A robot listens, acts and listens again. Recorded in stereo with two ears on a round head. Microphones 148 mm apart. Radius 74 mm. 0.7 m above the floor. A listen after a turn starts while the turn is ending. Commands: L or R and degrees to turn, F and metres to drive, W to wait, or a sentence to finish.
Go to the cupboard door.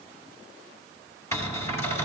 L20
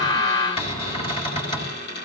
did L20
L145
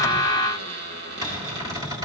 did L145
R25
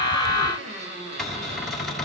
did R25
F1.0
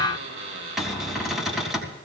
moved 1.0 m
F1.0
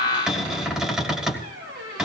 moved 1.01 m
F1.0
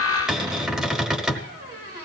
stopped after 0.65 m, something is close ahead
I am next to the cupboard door.